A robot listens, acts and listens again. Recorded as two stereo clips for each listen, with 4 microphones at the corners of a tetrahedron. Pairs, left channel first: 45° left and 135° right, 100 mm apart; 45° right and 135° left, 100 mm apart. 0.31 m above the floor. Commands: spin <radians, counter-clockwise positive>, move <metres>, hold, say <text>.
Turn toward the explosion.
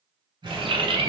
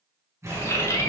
spin -2.88
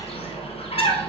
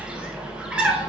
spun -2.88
say Facing where the explosion came from. I can't hear it now.